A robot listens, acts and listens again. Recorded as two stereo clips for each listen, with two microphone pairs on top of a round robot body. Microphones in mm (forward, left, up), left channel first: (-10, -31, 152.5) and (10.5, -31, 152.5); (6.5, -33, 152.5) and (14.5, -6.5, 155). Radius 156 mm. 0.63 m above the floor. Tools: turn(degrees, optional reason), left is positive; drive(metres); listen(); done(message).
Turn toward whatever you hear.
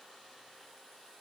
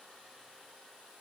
listen()
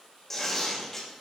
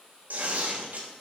turn(degrees=105, reason="The tearing paper: 105° left.")
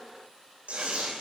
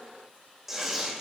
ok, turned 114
turn(degrees=-10, reason="The tearing paper is now 10° right.")
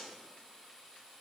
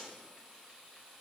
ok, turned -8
listen()
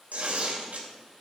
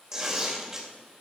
done("Found it: tearing paper, straight ahead, 2 to 4 m away.")